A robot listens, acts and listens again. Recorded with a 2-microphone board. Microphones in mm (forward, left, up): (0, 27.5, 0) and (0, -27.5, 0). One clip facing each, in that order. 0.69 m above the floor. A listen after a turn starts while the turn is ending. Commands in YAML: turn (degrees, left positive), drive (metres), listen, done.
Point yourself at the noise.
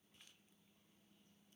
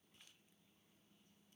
listen: true
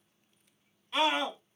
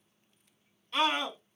turn: 30
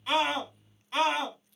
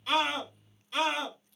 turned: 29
turn: 140
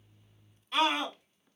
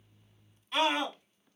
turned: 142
done: "Found it: a scream, straight ahead, 2 to 4 m away."